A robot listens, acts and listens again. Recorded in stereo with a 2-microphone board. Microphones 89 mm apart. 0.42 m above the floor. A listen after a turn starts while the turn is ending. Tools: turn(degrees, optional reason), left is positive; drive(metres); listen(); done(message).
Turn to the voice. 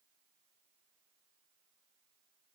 listen()
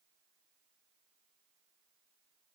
listen()
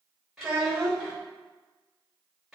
turn(degrees=-30)
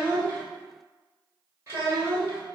turn(degrees=-145, reason="So it is at 145° right.")
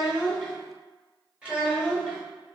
turn(degrees=-10, reason="The child speaking is now 10° right.")
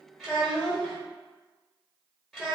done("Found it: a child speaking, straight ahead, under 1 m away.")